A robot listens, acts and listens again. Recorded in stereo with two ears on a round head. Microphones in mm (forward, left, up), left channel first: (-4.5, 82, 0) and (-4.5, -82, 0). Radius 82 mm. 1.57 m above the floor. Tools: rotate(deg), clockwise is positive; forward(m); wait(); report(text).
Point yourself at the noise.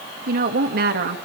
rotate(60)
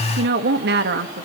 rotate(65)
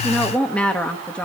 report("Found it: a woman speaking, straight ahead.")